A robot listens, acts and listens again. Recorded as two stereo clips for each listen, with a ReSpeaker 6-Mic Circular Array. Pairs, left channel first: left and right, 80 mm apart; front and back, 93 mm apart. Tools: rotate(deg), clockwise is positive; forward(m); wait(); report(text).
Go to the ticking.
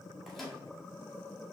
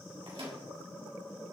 wait()
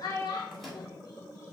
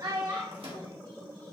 wait()
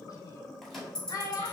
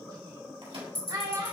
rotate(-10)
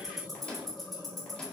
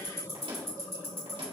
forward(1.0)
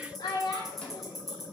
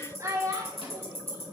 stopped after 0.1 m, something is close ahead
report("Something is in my way. I am facing the ticking but have not reached it.")